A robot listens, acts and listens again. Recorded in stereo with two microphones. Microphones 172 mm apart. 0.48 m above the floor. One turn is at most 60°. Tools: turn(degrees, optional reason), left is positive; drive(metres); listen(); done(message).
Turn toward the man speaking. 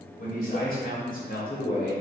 turn(degrees=55, reason="The man speaking: about 55° left or 125° left.")
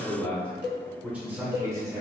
turn(degrees=-25, reason="So it is at 25° right.")
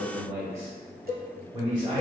turn(degrees=-30, reason="The man speaking is now 30° right.")
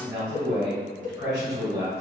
turn(degrees=-20, reason="The man speaking is now 20° right.")
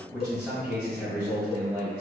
turn(degrees=-10, reason="The man speaking is now 10° right.")
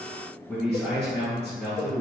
done("Facing the man speaking.")